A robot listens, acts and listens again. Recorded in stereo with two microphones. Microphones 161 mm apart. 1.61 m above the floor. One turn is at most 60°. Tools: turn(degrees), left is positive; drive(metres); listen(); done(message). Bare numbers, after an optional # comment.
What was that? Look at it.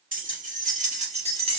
# The keys jangling: about 35° right or 145° right.
turn(-35)
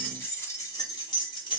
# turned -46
# So it is at 30° left.
turn(30)
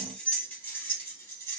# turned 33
# The keys jangling is now 15° left.
turn(15)
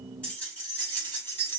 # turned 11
# The keys jangling is now 15° left.
turn(15)
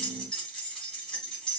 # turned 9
done("Facing the keys jangling.")